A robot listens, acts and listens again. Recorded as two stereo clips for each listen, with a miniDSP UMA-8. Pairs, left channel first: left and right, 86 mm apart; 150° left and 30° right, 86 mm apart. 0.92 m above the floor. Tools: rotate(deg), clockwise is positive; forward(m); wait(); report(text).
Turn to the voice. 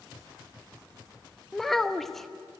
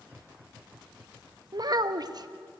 report("Found it: a child speaking, straight ahead, under 1 m away.")